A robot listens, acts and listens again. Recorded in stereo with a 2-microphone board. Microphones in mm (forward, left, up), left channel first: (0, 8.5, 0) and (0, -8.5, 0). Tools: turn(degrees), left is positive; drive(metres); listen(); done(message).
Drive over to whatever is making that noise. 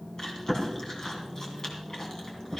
turn(degrees=20)
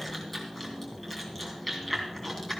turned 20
drive(metres=1.0)
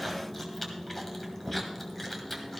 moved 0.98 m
drive(metres=1.0)
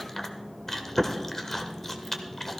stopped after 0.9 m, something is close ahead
turn(degrees=10)
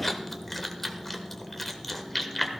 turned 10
done("I am next to the chewing.")